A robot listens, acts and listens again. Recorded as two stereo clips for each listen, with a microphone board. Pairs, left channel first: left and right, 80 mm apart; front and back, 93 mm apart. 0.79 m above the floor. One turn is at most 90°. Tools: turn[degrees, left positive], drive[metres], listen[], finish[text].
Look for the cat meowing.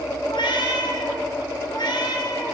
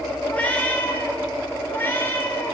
Thought: The cat meowing: 65° left.
Action: turn[65]
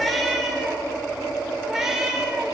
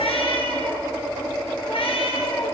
Action: finish[Facing the cat meowing.]